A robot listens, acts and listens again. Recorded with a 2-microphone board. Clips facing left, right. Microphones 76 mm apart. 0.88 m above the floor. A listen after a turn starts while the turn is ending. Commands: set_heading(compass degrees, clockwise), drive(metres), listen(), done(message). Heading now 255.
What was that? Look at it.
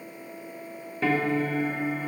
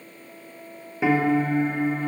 set_heading(285)
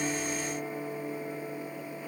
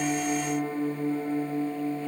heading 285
set_heading(60)
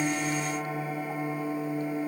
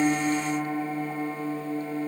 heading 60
set_heading(75)
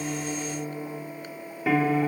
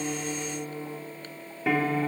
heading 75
done("Found it: a piano, straight ahead, 2 to 4 m away.")